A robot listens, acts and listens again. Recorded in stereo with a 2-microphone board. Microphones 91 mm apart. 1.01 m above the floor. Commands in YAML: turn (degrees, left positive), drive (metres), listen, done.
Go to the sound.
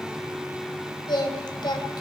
turn: 55
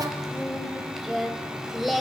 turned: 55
drive: 1.0
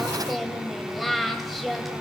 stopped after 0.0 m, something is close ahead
done: "Blocked. The singing is further on, straight ahead."